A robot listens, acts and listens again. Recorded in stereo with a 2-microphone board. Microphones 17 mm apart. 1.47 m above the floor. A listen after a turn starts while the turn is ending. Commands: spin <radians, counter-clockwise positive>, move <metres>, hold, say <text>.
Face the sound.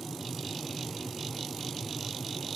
hold
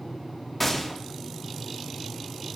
spin 0.52
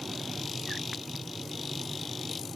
hold
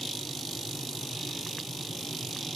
say I heard a gunshot, but can't make it out now. It was about 20° right or 140° left.